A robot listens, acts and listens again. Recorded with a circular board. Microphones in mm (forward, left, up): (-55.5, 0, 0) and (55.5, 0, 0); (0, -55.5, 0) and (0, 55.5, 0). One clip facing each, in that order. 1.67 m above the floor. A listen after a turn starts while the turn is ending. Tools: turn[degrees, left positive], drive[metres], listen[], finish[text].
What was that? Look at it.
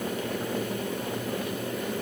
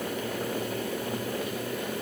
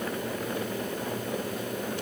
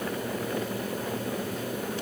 Action: listen[]
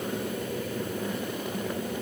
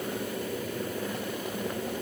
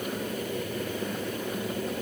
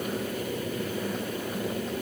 Action: listen[]
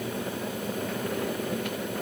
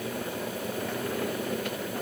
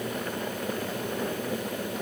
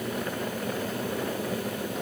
Action: finish[I can't make out anything to turn to.]